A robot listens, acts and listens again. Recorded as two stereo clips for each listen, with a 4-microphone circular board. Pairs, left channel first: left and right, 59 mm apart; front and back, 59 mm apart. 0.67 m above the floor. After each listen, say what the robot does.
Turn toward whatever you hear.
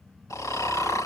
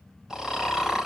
Turn 100° left.
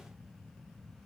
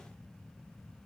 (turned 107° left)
Keep listening.
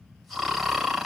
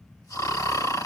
Facing the snoring, 2 to 4 m away.